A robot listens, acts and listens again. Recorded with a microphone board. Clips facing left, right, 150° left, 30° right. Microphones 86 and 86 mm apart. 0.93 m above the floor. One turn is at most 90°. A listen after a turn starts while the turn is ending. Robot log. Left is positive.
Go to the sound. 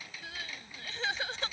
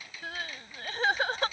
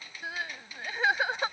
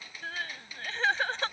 note: The crying: 130° right.
cmd yaw -90
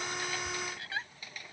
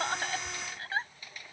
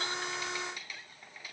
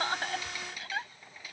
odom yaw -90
note: The crying is now 35° right.
cmd yaw -35
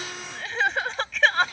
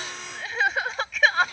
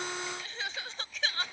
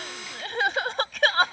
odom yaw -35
cmd fwd 1.0
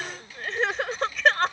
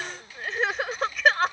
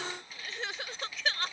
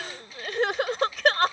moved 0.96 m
cmd fwd 1.0
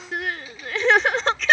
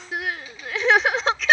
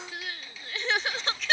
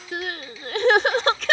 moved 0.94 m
cmd fwd 1.0
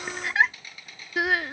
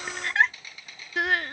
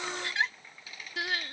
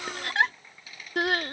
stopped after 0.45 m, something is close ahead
end: I am next to the crying.